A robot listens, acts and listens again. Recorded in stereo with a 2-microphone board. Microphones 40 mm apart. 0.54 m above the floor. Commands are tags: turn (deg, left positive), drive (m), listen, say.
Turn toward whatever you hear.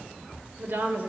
<turn deg="-60"/>
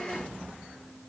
<listen/>
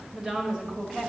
<turn deg="-15"/>
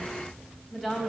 <say>Facing the woman speaking, 2 to 4 m away.</say>